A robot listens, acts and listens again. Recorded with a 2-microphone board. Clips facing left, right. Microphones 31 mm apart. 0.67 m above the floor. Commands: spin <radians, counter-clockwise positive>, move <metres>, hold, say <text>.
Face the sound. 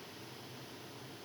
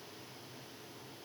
hold
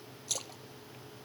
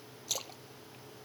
spin -0.52
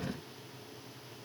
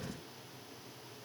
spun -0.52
hold
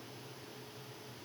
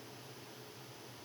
say I heard a splash, but can't make it out now. It was about 25° left or 145° right.